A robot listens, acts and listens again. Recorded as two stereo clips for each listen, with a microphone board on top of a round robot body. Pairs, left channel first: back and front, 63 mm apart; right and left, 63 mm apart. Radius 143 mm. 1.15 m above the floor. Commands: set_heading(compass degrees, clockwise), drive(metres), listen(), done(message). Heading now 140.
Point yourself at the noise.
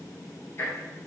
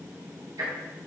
set_heading(15)
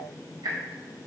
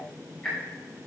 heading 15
set_heading(25)
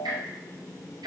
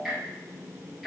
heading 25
done("Facing the ticking, 2 to 4 m away.")